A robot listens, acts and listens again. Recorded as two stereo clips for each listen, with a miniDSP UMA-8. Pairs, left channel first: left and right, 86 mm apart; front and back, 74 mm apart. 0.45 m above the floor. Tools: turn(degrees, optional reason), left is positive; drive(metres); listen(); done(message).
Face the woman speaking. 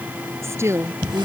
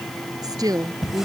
turn(degrees=-150, reason="The woman speaking: 150° right.")
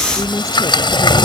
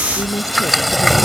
listen()
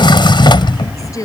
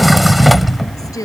turn(degrees=40, reason="The woman speaking is now 40° left.")
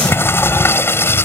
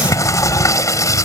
listen()
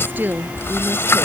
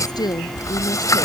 turn(degrees=-20, reason="The woman speaking is now 20° right.")
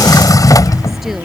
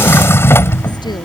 done("Found it: a woman speaking, straight ahead.")